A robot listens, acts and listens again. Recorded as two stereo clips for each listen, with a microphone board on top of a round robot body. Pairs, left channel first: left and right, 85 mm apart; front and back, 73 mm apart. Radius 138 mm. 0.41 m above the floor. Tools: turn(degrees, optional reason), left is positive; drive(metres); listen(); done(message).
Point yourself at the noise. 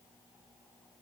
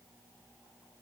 listen()
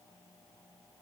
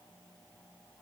listen()
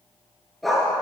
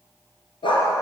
done("Facing the dog barking, 2 to 4 m away.")